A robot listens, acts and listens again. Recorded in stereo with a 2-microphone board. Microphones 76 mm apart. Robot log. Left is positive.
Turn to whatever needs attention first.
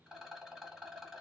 cmd idle
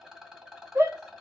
note: The shout: about 40° right or 140° right.
cmd yaw -40
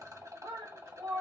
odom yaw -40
note: So it is at 100° right.
cmd yaw -100
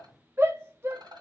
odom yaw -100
note: The shout is now 35° right.
cmd yaw -35
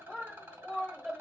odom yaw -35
end: Found it: a shout, straight ahead, under 1 m away.